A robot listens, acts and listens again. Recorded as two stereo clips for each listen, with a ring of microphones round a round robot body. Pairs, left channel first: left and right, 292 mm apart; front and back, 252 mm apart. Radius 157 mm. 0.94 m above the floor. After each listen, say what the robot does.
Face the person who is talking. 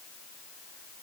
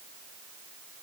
Keep listening.
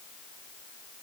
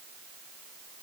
Keep listening.
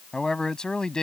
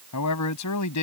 Facing the man speaking.